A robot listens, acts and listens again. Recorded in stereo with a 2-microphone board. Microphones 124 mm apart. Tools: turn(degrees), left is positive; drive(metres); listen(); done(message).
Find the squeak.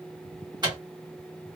listen()
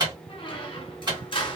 turn(degrees=40)
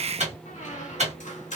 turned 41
turn(degrees=95)
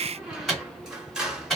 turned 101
done("Found it: a squeak, straight ahead, under 1 m away.")